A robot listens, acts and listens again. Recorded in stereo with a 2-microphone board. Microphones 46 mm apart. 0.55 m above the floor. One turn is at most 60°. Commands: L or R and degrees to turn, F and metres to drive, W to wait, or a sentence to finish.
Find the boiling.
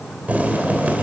R35
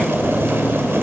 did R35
R60
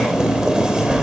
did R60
R20
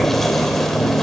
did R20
Found it: boiling, straight ahead, 2 to 4 m away.